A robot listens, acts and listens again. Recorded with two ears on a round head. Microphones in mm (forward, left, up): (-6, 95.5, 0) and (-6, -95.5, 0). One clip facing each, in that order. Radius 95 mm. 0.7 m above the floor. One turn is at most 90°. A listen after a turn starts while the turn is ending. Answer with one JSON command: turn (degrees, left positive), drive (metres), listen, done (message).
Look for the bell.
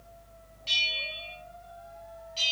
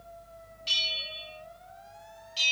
{"turn": -30}
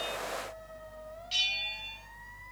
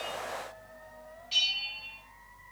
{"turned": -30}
{"turn": 15}
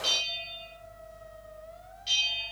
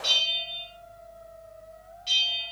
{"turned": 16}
{"done": "Facing the bell, over 4 m away."}